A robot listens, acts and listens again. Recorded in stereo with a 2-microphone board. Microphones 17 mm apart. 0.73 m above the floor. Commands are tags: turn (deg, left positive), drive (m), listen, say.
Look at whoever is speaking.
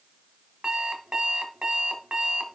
<listen/>
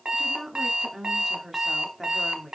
<turn deg="-30"/>
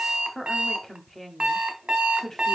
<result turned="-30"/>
<turn deg="25"/>
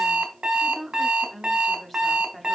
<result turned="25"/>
<say>Facing the woman speaking, 1 to 2 m away.</say>